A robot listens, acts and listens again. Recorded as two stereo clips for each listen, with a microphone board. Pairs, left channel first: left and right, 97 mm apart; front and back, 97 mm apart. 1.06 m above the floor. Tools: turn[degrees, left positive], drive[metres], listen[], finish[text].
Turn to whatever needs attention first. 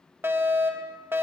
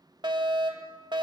Thought: The fire alarm: 155° right.
Action: turn[-155]
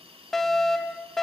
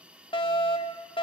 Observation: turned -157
Action: finish[Found it: a fire alarm, straight ahead.]